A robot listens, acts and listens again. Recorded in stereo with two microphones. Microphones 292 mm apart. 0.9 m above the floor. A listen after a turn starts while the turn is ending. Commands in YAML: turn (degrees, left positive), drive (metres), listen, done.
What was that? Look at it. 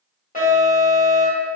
turn: 25
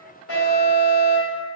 turn: 125
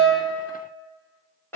turn: 10
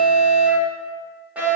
done: "Facing the alarm."